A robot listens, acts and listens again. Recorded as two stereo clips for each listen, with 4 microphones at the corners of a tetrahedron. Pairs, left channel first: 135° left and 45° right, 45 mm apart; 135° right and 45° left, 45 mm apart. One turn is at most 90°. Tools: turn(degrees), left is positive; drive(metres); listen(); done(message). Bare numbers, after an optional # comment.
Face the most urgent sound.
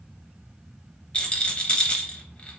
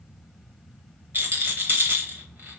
listen()
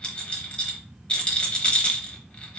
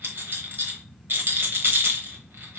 listen()
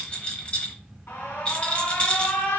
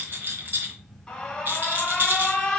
# The alarm: 145° left.
turn(90)
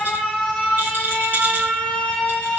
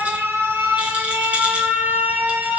# The alarm is now 60° left.
turn(60)
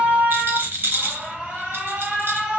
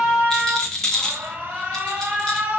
# The alarm is now 10° left.
turn(10)
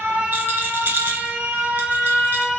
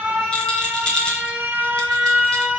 done("Found it: an alarm, straight ahead.")